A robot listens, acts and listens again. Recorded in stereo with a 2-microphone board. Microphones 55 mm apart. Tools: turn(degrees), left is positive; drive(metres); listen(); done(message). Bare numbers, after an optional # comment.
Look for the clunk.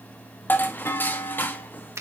# The clunk: about 55° left or 125° left.
turn(55)
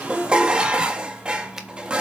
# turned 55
listen()
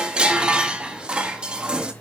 done("I heard a clunk, but can't make it out now. It was about straight ahead or 70° left.")